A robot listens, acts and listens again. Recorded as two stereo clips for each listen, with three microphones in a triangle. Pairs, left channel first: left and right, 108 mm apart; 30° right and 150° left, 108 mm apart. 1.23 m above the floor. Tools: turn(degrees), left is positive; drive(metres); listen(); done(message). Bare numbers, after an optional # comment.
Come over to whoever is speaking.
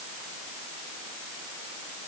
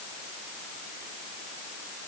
listen()
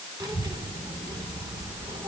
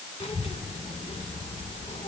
# The child speaking: 40° right.
turn(-40)
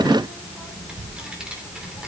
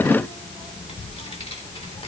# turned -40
# The child speaking is now 10° right.
turn(-10)
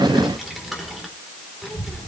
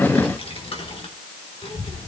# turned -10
drive(1.0)
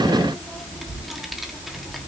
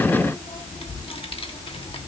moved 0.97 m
drive(1.0)
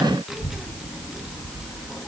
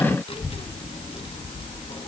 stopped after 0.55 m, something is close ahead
done("Arrived at the child speaking, straight ahead.")